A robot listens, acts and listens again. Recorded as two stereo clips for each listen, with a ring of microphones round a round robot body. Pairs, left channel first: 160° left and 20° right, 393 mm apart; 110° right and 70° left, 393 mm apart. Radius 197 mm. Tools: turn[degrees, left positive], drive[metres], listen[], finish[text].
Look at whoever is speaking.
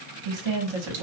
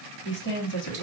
Thought: The woman speaking: 50° right.
Action: turn[-50]
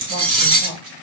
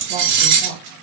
Action: listen[]
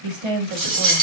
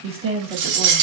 Thought: The woman speaking is now 10° right.
Action: turn[-10]
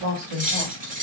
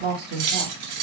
Action: finish[Facing the woman speaking, 1 to 2 m away.]